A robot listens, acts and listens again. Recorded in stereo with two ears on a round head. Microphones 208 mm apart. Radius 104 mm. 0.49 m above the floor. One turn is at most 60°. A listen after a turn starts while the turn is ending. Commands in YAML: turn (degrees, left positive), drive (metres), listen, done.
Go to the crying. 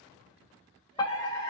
listen: true
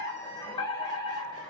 listen: true
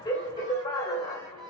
done: "I can't make out crying to turn to."